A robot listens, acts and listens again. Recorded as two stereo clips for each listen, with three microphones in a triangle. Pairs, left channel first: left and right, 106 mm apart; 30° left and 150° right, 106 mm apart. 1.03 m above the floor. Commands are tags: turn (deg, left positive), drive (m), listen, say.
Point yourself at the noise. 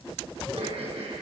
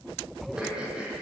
<turn deg="-70"/>
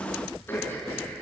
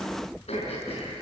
<turn deg="20"/>
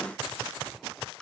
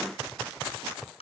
<say>Found it: throat clearing, straight ahead, over 4 m away.</say>